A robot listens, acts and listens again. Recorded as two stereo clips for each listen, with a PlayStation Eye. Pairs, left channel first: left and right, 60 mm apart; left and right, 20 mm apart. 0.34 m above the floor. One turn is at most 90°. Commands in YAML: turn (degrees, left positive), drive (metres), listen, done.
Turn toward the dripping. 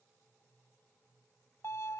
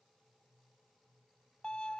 listen: true
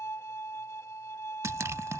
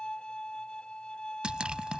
turn: -55
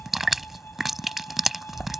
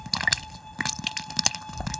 done: "Facing the dripping."